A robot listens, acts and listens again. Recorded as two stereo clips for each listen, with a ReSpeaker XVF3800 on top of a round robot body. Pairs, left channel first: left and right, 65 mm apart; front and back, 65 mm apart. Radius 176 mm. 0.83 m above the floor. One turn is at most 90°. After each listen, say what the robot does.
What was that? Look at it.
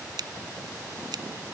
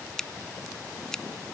Turn 80° right.
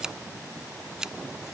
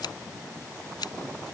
Turn 10° right.
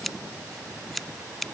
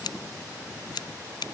Facing the scissors.